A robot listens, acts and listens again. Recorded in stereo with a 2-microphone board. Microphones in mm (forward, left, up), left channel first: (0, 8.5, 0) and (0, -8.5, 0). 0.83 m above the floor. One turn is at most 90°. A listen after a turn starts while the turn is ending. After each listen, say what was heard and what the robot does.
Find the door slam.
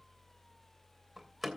Turn 30° right.
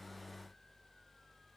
Keep listening.
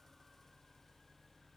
I heard a door slam, but can't make it out now. It was about 20° left or 140° right.